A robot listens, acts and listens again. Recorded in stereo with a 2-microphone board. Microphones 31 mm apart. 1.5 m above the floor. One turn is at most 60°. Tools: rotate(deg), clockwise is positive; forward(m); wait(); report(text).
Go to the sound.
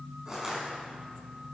rotate(15)
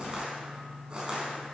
rotate(60)
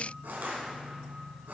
rotate(60)
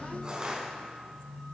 rotate(25)
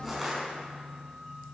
forward(1.0)
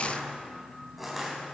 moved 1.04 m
forward(1.0)
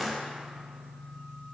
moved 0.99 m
forward(1.0)
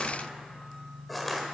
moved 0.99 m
forward(1.0)
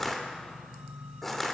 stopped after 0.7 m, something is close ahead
rotate(-15)
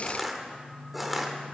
report("Arrived at the crushing, straight ahead.")